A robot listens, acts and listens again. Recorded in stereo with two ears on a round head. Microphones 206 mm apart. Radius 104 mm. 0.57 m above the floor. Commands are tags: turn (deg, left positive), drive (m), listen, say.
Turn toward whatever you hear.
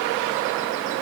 <listen/>
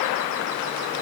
<listen/>
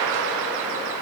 <say>I can't make out anything to turn to.</say>